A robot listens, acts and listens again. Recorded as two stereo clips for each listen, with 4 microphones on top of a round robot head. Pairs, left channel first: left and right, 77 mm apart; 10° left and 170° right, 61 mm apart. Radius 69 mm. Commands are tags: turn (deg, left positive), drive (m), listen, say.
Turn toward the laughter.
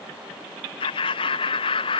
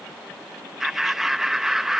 <turn deg="105"/>
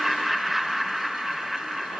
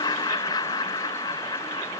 <say>Facing the laughter.</say>